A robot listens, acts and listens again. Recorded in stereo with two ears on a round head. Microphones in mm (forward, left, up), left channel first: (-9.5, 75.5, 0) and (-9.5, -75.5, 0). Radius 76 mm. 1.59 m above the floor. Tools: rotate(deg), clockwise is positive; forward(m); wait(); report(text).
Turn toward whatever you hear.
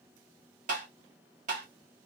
rotate(45)
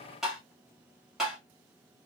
report("Facing the tapping, 1 to 2 m away.")